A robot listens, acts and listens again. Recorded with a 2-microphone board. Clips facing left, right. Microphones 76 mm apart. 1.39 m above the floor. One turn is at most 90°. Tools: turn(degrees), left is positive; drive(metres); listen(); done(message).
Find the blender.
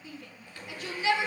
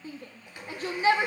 turn(degrees=-20)
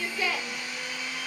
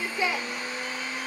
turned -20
turn(degrees=-90)
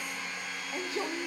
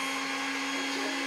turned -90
turn(degrees=-90)
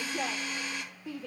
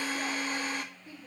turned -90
turn(degrees=-40)
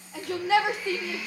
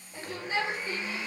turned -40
turn(degrees=-30)
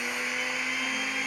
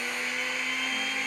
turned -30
done("Facing the blender.")